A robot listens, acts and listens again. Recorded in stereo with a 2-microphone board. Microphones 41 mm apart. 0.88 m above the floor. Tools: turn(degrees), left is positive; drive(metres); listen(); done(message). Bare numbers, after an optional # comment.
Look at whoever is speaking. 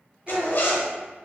# The child speaking: about 25° right or 155° right.
turn(-25)
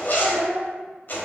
# So it is at 135° right.
turn(-135)
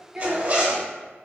# The child speaking is now 15° right.
turn(-15)
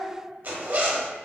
done("Found it: a child speaking, straight ahead.")